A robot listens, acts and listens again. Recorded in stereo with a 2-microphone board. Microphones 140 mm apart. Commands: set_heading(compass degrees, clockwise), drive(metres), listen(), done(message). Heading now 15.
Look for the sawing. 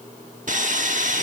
set_heading(80)
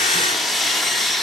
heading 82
done("Found it: sawing, straight ahead.")